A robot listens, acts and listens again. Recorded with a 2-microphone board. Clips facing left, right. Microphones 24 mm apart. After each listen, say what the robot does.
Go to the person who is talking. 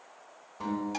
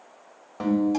Keep listening.
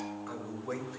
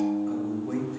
Turn 35° left.
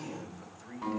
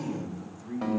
Drive 1.0 m forward.
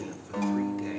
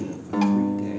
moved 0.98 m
Drive 1.0 m forward.
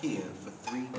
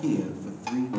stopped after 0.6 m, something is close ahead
I am next to the man speaking.